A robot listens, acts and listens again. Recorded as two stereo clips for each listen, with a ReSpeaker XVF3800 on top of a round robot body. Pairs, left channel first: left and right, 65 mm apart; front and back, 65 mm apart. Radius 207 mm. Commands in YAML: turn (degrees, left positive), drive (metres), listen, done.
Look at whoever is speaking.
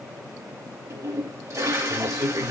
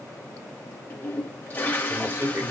turn: -130
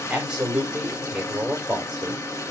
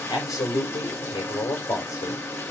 turn: -20
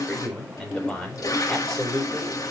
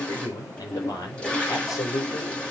done: "Found it: a man speaking, straight ahead, over 4 m away."